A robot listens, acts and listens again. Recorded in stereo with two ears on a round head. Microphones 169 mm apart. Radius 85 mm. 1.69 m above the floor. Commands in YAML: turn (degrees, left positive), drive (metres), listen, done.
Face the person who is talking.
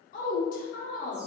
turn: 45
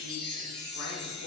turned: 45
listen: true
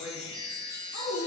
turn: 85
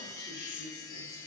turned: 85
listen: true
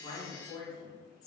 turn: 20
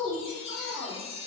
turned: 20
turn: 10
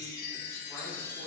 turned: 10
listen: true
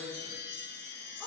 listen: true
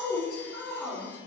done: "Found it: a woman speaking, straight ahead, 1 to 2 m away."